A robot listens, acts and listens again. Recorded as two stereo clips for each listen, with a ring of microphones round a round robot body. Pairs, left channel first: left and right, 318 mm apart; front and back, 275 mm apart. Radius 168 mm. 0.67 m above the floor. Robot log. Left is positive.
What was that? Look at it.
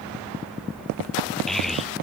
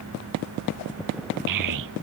note: The child speaking: straight behind.
cmd yaw +180
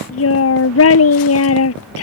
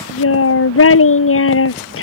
note: The child speaking is now 40° left.
cmd yaw +40
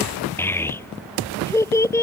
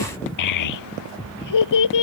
note: The child speaking is now 10° left.
cmd yaw +10
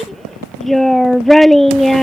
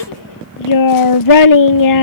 end: Facing the child speaking.